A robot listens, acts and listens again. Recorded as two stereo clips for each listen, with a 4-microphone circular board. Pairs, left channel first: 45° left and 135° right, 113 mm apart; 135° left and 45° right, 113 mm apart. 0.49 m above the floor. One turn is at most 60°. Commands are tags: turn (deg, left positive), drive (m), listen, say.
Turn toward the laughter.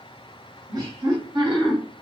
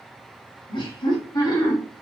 <turn deg="-60"/>
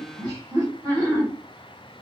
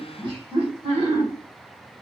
<turn deg="-60"/>
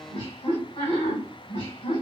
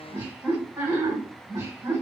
<turn deg="20"/>
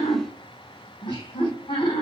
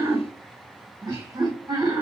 <turn deg="10"/>
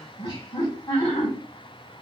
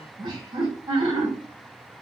<say>Facing the laughter, 2 to 4 m away.</say>